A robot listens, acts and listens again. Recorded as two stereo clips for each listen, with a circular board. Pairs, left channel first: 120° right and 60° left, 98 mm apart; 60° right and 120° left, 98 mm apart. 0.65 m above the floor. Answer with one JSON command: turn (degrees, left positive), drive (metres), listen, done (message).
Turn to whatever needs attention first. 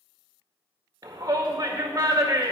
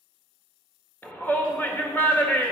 {"turn": 10}
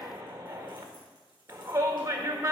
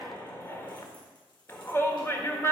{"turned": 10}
{"done": "Facing the shout, 1 to 2 m away."}